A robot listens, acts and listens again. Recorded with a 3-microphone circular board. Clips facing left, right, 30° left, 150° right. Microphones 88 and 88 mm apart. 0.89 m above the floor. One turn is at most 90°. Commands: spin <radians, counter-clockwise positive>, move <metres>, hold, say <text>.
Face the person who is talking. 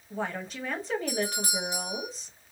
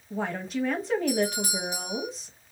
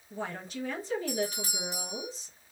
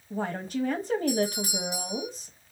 spin 1.57
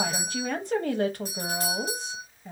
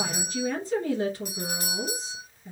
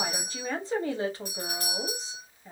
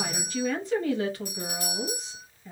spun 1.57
spin 1.48
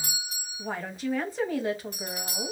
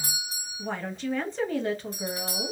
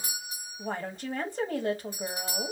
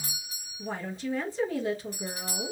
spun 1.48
spin 0.17
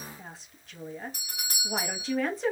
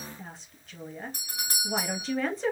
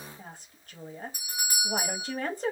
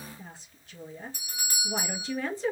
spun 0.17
say Facing the woman speaking.